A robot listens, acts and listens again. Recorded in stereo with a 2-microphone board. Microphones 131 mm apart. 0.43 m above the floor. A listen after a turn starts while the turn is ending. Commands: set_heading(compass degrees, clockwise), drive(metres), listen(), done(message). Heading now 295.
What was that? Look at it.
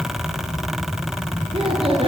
set_heading(340)
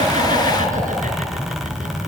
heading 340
listen()
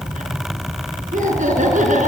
set_heading(85)
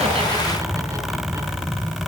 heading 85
listen()
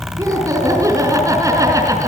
set_heading(110)
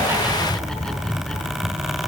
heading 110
listen()
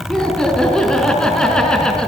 done("Facing the laughter.")